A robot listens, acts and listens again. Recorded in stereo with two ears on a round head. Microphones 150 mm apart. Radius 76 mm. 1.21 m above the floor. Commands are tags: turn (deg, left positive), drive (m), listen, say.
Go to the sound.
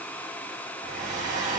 <turn deg="-50"/>
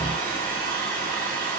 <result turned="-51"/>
<turn deg="-65"/>
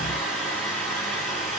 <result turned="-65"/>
<drive m="1.0"/>
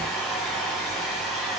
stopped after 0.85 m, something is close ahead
<say>I am next to the hair dryer.</say>